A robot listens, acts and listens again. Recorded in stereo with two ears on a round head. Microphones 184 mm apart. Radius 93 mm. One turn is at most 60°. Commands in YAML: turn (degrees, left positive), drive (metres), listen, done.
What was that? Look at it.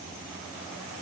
listen: true
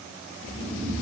turn: -15
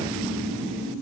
turn: -60
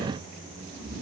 turn: -60
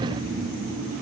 turn: -45
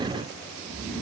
done: "Found it: snoring, straight ahead, 2 to 4 m away."